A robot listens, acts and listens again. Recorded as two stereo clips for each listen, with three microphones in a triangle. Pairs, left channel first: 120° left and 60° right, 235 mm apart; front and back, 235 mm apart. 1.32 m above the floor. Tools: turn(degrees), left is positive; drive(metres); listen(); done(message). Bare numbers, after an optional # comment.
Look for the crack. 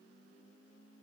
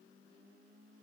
listen()
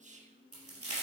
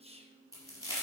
# The crack: 75° right.
turn(-75)
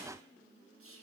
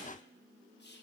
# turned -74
done("Facing where the crack came from. I can't hear it now.")